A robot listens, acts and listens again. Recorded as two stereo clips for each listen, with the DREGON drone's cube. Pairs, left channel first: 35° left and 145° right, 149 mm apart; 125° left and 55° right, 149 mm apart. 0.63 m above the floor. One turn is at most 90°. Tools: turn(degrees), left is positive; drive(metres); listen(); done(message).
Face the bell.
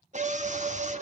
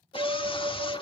turn(degrees=-90)
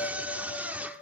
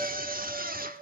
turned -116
turn(degrees=15)
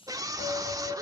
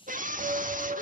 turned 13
done("Found it: a bell, straight ahead, 1 to 2 m away.")